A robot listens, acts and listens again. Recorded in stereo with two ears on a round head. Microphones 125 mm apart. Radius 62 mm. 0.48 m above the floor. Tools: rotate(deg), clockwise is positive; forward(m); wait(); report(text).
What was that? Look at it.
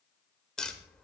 rotate(-30)
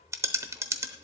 rotate(25)
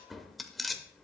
report("Found it: tapping, straight ahead, under 1 m away.")